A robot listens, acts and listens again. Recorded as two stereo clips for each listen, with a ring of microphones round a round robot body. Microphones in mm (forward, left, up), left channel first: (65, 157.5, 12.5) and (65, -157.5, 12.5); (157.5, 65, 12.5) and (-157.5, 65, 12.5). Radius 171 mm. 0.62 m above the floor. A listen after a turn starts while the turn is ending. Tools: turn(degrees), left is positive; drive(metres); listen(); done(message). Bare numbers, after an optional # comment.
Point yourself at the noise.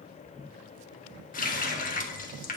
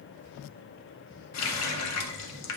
# The running tap: 30° left.
turn(30)
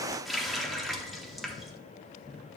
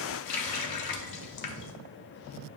done("Found it: a running tap, straight ahead, under 1 m away.")